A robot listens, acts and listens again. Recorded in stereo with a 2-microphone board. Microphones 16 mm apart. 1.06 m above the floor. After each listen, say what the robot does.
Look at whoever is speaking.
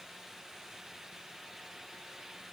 Keep listening.
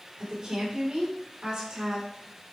Turn 50° right.
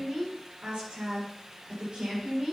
Turn 70° right.
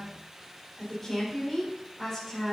Turn 10° left.
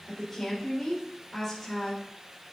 Found it: a woman speaking, straight ahead.